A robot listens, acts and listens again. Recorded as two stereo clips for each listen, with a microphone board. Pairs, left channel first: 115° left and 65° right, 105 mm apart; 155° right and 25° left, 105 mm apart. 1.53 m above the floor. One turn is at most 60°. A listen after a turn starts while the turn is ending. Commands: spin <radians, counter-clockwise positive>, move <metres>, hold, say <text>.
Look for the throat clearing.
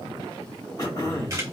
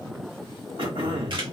spin 1.05
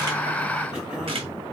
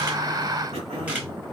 spin 0.35
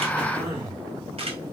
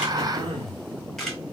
say Found it: throat clearing, straight ahead.